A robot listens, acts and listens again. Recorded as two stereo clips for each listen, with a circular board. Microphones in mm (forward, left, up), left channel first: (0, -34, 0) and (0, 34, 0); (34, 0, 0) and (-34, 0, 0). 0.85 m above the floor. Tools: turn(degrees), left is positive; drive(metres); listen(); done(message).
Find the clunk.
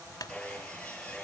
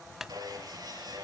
turn(degrees=-95)
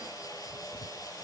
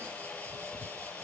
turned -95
done("I heard a clunk from this way, but can't make it out now.")